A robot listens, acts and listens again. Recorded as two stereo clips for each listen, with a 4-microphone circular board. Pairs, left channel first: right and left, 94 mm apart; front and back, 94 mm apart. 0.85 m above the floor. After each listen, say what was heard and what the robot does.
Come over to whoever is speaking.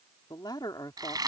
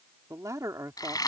The man speaking: 130° right. Turn 130° right.
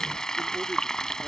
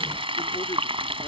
Keep listening.
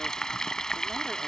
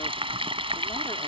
Keep listening.
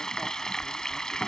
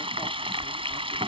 I heard a man speaking from this way, but can't make it out now. I did not reach it.